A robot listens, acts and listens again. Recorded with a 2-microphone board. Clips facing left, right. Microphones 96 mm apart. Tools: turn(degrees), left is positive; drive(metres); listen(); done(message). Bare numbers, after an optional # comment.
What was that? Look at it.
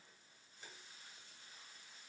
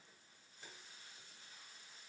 listen()
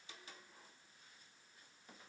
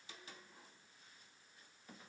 listen()
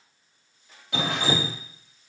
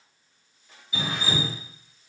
# The dripping: about 70° left or 110° left.
turn(70)
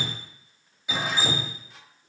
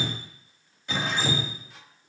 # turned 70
done("Facing the dripping.")